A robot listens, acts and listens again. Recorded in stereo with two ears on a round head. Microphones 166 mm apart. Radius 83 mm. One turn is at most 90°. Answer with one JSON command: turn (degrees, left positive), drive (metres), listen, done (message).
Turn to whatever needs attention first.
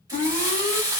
{"turn": 40}
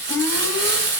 {"done": "Facing the alarm, 1 to 2 m away."}